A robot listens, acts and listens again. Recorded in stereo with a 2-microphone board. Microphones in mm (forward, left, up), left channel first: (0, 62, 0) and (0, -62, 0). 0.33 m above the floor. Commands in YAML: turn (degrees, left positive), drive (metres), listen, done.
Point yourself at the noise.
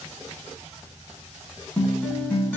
turn: 30
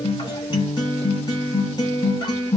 turn: 130
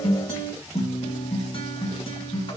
turn: 55
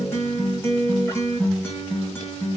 turn: 20
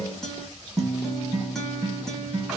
done: "Found it: a guitar, straight ahead."